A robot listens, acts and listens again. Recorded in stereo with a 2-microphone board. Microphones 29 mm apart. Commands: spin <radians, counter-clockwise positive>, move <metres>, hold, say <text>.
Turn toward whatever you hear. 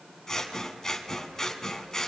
spin 0.35
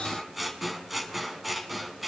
say Found it: scissors, straight ahead.